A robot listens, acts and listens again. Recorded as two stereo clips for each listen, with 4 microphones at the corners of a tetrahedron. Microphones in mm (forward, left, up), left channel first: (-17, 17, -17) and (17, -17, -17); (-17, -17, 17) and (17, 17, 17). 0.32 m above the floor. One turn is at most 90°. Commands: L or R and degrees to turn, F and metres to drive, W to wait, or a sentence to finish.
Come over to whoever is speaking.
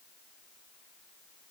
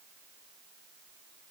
W
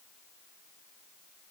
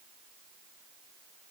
W
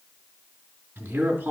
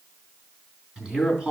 R25
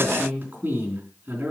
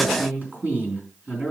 F1.0
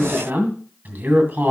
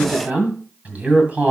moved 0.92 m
F1.0
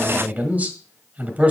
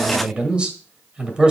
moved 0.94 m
R10
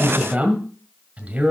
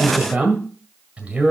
F1.0
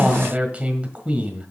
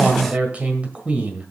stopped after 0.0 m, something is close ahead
I am next to the man speaking.